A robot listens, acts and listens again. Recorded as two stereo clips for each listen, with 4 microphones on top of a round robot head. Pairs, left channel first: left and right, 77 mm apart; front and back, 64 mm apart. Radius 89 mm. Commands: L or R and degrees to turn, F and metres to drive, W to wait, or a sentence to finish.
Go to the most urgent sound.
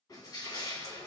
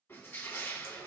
W
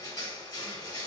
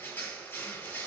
W
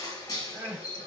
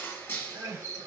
R165
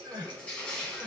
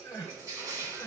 R50
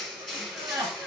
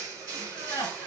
R40
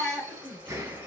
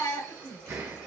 F1.0
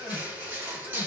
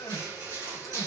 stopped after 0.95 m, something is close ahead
I am next to the crying.